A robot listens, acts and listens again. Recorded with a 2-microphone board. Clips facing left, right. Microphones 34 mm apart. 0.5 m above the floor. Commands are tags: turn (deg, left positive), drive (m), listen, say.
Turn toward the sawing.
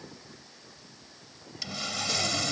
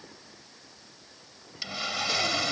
<turn deg="-15"/>
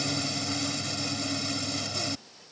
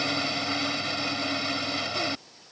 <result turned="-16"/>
<turn deg="-150"/>
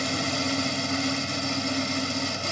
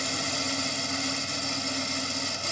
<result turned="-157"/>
<turn deg="10"/>
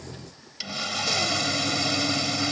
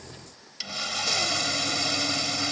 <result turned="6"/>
<say>Found it: sawing, straight ahead.</say>